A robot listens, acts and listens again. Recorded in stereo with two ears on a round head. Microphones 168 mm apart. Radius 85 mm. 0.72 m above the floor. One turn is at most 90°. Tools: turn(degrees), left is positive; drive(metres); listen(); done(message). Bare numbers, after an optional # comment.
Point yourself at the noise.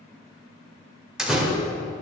turn(-30)
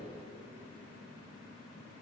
listen()
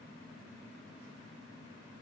done("I heard a door slam, but can't make it out now. It was about 25° left or 145° right.")